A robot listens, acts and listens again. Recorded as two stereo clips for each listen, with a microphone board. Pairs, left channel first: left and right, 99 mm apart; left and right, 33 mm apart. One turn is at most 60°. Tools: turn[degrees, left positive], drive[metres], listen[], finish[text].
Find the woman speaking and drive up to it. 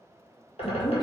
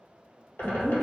Thought: The woman speaking: about 40° left or 140° left.
Action: turn[40]
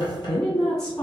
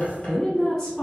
Thought: So it is at 10° left.
Action: turn[10]
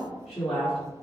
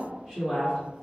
Action: drive[1.0]
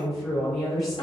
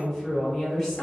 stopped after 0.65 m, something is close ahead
Action: finish[I am next to the woman speaking.]